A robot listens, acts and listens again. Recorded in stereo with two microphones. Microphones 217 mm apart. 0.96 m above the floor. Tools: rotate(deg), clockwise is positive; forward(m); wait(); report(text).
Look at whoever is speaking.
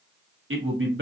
rotate(70)
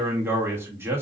rotate(10)
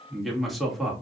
report("Facing the man speaking, 1 to 2 m away.")